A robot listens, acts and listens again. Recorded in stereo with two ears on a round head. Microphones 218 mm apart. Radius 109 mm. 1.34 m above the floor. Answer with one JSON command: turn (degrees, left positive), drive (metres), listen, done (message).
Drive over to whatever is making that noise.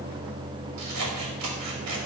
{"turn": -90}
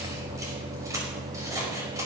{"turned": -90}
{"turn": -15}
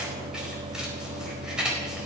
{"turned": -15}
{"drive": 1.0}
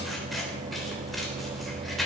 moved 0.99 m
{"drive": 1.0}
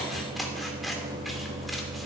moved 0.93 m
{"drive": 1.0}
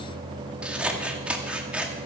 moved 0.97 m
{"drive": 1.0}
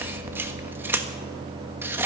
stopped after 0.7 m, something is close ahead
{"turn": -10}
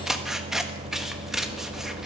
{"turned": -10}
{"done": "Arrived at the scissors, straight ahead."}